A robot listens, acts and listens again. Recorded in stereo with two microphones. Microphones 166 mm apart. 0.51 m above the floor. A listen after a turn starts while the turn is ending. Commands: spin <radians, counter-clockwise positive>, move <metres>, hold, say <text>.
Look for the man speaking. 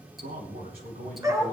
spin -1.05
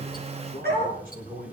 spin -1.05
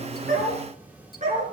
hold
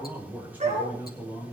spin -0.17
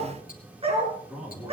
say Found it: a man speaking, straight ahead.